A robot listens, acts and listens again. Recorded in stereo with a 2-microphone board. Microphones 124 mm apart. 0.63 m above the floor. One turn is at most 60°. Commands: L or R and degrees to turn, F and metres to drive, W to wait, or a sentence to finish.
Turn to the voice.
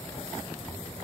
W
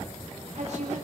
R60
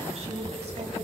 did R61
R55
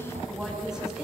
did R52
Found it: a woman speaking, straight ahead.